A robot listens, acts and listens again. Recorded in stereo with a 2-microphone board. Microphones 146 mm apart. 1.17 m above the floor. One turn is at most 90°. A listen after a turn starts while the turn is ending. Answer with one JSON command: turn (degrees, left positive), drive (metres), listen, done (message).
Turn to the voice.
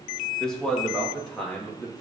{"turn": 30}
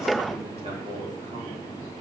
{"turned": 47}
{"listen": true}
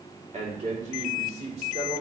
{"turn": -45}
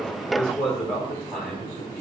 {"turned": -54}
{"done": "Found it: a man speaking, straight ahead."}